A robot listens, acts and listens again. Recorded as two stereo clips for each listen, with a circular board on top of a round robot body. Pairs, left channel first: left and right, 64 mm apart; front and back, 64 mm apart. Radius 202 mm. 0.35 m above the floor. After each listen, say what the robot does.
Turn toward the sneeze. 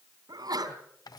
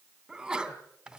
Turn 100° right.
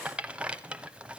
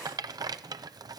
I heard a sneeze from this way, but can't make it out now.